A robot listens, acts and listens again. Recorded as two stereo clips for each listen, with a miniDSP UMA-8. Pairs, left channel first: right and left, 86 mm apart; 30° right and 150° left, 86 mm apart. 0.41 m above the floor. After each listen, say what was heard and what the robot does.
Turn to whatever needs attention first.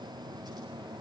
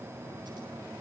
Keep listening.
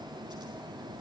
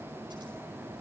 Keep listening.
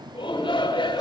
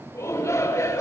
The shout: 80° right. Turn 80° right.
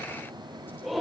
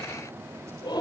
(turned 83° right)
Found it: a shout, straight ahead.